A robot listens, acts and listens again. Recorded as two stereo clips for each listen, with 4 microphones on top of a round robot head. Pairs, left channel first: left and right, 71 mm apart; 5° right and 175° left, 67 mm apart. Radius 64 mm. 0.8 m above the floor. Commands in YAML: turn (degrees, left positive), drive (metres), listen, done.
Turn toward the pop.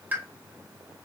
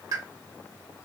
turn: -155
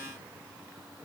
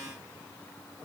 done: "I heard a pop from this way, but can't make it out now."